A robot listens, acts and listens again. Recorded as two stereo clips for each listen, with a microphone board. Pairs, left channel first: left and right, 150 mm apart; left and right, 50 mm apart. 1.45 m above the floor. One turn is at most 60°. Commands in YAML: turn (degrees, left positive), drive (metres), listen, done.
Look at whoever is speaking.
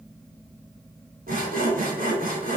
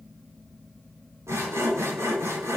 listen: true
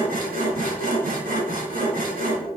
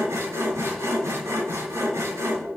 listen: true
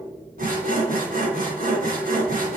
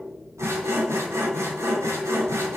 done: "I can't make out anyone speaking, only sawing."